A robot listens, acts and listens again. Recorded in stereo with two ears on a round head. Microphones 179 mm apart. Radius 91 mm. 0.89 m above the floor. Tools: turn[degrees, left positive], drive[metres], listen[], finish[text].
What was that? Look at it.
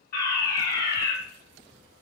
Thought: The fire alarm: about 40° left or 140° left.
Action: turn[40]
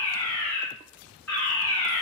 Thought: So it is at 10° left.
Action: turn[10]
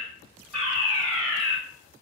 Action: finish[Found it: a fire alarm, straight ahead, over 4 m away.]